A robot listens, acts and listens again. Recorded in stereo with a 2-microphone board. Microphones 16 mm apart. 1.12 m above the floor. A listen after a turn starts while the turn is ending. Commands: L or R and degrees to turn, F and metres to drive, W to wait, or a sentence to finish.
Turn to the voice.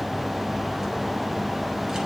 W
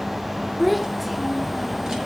R30
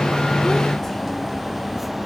W
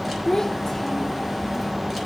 L25
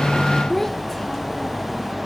L15
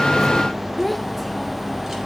Facing the child speaking, under 1 m away.